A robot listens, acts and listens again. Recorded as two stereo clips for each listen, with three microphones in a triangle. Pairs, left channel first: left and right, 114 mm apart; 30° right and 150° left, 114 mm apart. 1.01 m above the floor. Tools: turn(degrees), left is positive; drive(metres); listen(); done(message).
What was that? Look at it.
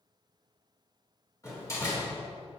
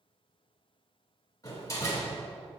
turn(degrees=30)
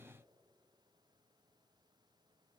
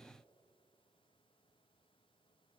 done("I heard a door slam from this way, but can't make it out now.")